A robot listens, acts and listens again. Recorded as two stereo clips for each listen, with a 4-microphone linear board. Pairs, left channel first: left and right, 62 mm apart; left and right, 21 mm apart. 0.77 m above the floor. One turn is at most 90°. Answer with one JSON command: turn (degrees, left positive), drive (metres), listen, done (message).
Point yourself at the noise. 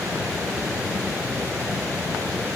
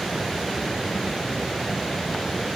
{"listen": true}
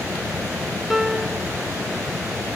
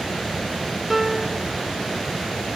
{"turn": -30}
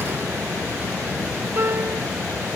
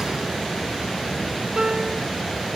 {"turn": -90}
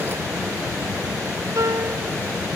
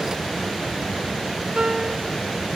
{"turn": -55}
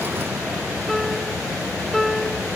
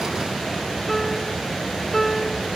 {"done": "Found it: a piano, straight ahead."}